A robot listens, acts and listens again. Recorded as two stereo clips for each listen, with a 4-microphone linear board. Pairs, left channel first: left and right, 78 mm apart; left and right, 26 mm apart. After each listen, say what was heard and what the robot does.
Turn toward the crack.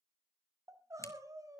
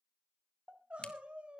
The crack: about 40° left or 140° left. Turn 40° left.
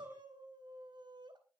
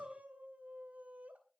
Keep listening.
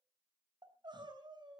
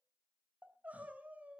I heard a crack, but can't make it out now. It was about straight ahead or 100° left.